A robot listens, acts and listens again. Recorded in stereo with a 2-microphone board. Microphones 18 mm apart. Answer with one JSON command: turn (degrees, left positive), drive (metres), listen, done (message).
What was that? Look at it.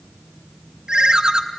{"turn": -45}
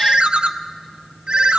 {"turn": -85}
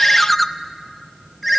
{"done": "Facing the ringtone."}